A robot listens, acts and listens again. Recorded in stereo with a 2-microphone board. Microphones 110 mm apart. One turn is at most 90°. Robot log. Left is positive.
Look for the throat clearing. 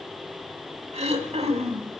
note: The throat clearing: about 75° right or 105° right.
cmd yaw -75
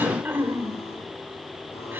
note: So it is at 20° right.
cmd yaw -20
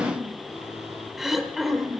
end: Facing the throat clearing.